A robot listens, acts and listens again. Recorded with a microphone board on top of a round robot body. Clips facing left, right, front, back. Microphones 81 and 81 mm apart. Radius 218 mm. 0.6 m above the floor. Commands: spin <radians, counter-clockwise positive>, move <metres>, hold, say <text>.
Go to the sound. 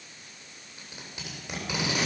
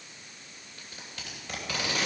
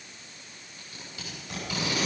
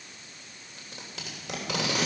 spin 2.88
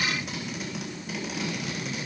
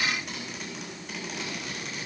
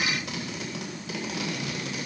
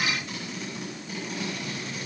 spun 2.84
move 1.0
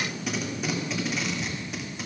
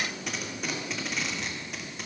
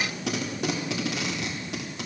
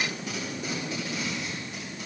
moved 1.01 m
move 1.0
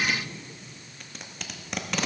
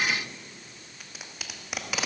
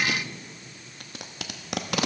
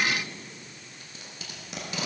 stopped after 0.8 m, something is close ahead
say I am next to the tape being pulled.